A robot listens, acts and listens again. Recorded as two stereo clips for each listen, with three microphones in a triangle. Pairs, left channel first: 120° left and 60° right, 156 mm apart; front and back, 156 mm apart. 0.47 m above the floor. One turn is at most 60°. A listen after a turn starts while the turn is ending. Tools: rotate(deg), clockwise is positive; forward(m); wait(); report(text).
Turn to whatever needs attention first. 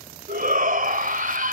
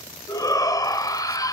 rotate(60)
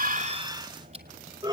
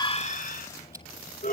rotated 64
report("Found it: a shout, straight ahead.")